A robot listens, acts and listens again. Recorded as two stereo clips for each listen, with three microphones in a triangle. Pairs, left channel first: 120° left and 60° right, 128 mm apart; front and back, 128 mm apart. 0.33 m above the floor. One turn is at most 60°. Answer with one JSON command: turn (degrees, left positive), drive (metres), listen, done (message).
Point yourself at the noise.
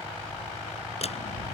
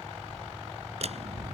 {"turn": 60}
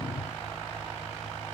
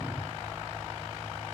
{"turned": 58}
{"turn": 60}
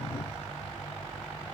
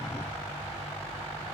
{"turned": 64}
{"turn": 30}
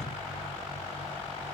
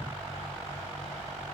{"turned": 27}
{"done": "Facing where the door slam came from. I can't hear it now."}